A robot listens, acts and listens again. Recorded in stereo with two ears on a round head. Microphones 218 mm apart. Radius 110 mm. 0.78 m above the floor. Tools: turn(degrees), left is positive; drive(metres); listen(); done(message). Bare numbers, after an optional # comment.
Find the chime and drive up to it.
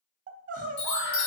# The chime: about 55° left or 125° left.
turn(55)
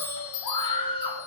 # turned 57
# So it is at 70° left.
turn(70)
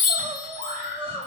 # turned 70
drive(1.0)
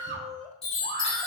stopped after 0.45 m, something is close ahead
done("Something is in my way. I am facing the chime but have not reached it.")